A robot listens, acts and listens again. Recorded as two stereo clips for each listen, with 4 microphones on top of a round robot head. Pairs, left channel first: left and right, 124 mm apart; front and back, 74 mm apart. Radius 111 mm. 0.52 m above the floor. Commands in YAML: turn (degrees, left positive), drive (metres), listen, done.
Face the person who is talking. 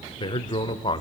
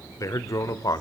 turn: 35
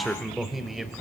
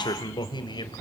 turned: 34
done: "Found it: a man speaking, straight ahead."